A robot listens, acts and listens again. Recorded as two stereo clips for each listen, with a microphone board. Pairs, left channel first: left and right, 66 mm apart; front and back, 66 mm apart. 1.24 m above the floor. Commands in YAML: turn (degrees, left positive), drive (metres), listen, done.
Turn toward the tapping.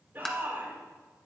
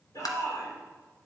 turn: 10
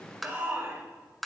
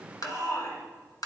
done: "Found it: tapping, straight ahead."